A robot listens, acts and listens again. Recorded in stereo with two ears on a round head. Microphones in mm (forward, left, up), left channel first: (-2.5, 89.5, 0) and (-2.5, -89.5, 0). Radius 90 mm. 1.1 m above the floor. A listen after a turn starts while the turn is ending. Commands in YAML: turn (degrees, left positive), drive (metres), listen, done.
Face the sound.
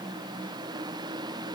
listen: true
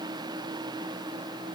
listen: true
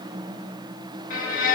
turn: 40
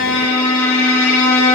turn: 100
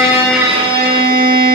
turn: -25
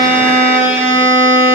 turn: -10
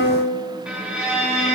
done: "Facing the violin, 1 to 2 m away."